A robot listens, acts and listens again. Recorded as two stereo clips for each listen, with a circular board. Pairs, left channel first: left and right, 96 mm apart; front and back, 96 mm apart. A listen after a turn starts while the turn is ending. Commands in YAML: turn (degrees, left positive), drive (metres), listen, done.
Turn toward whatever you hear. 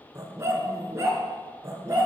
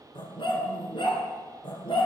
turn: -30
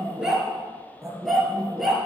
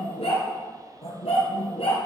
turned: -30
done: "Found it: a dog barking, straight ahead."